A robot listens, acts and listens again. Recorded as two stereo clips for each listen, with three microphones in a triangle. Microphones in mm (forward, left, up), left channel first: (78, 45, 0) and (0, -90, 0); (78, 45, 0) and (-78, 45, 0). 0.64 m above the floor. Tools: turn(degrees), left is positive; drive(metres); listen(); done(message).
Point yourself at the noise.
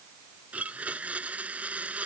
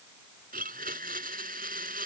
turn(degrees=160)
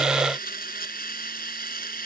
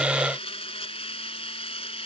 turn(degrees=50)
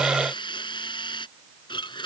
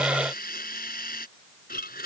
done("Found it: a blender, straight ahead.")